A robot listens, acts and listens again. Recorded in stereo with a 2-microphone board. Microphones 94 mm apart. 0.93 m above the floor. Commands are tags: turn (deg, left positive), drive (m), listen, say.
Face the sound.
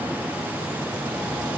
<listen/>
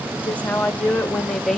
<turn deg="30"/>
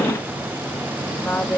<turn deg="30"/>
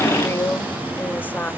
<turn deg="155"/>
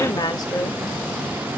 <turn deg="40"/>
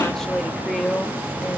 <say>Facing the woman speaking, 1 to 2 m away.</say>